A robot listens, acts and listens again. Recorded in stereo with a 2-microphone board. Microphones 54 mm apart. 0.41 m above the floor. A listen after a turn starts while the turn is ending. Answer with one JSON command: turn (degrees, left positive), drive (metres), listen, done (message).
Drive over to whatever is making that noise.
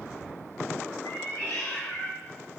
{"turn": 65}
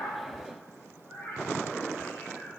{"turn": 40}
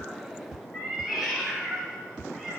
{"drive": 1.0}
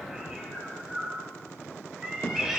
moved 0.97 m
{"turn": -10}
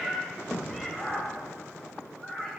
{"drive": 1.0}
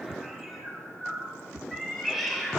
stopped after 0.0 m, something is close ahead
{"done": "I am next to the cat meowing."}